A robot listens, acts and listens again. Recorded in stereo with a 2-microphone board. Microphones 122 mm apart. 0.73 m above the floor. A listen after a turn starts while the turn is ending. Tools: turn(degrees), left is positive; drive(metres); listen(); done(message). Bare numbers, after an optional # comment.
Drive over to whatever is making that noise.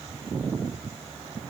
listen()
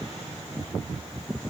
listen()
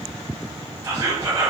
# The whispering: about 30° right or 150° right.
turn(-30)
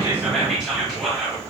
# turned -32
drive(1.0)
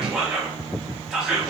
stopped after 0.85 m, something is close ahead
done("I am next to the whispering.")